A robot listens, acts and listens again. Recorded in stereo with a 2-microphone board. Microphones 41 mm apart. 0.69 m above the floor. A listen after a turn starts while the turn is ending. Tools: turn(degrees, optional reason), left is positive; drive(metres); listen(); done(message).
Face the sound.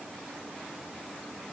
listen()
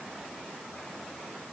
listen()
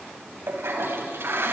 turn(degrees=-90)
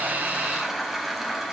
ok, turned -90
done("Facing the toilet flushing, 2 to 4 m away.")